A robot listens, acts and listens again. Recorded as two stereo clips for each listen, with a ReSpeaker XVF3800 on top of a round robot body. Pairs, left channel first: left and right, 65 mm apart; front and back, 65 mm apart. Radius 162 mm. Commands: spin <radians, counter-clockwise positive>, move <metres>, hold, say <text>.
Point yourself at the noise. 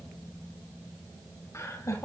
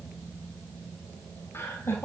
spin 0.96
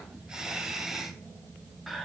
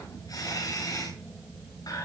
say Found it: laughter, straight ahead.